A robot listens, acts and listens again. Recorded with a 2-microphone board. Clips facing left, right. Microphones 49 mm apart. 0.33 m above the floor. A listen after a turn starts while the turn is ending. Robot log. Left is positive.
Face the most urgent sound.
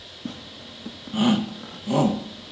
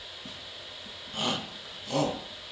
cmd yaw +30
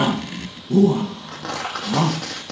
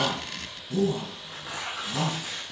note: So it is at 130° left.
cmd yaw +130
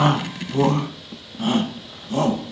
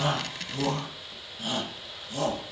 note: The shout is now 55° left.
cmd yaw +55
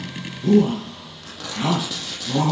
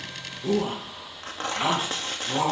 end: Facing the shout.